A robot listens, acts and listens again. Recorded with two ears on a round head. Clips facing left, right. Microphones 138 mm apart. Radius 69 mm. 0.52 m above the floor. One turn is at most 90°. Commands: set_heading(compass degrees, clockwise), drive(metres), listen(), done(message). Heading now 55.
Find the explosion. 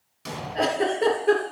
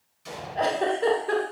set_heading(350)
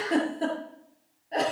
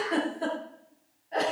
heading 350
listen()
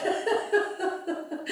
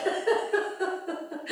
done("I heard an explosion, but can't make it out now. It was about straight ahead or 50° left.")